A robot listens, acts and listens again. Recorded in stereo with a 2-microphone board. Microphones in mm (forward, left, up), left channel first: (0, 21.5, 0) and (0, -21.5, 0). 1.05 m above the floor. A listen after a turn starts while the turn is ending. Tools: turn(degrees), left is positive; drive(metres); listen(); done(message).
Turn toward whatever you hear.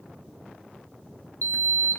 turn(degrees=55)
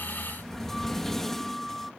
turn(degrees=10)
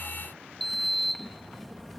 done("Found it: a sliding door, straight ahead.")